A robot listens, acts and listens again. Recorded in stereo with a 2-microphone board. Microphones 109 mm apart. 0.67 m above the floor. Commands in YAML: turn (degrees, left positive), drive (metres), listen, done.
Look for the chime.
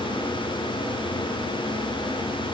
listen: true
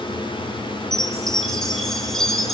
turn: 30
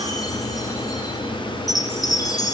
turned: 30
turn: 145
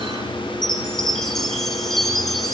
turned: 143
done: "Found it: a chime, straight ahead, over 4 m away."